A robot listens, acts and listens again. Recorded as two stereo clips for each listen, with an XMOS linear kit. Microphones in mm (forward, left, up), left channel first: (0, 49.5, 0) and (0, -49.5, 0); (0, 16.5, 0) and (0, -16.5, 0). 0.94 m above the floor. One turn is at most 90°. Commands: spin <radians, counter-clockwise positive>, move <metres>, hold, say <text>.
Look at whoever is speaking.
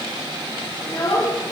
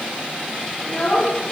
spin 0.61
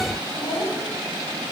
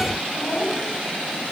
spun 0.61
spin 1.57
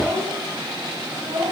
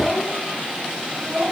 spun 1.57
say Found it: a child speaking, straight ahead.